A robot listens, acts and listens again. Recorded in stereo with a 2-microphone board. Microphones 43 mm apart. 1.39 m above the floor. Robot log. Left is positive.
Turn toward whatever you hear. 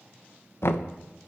note: The knocking: about 65° left or 115° left.
cmd yaw +65
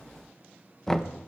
note: So it is at 10° left.
cmd yaw +10
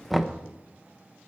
end: Found it: knocking, straight ahead, under 1 m away.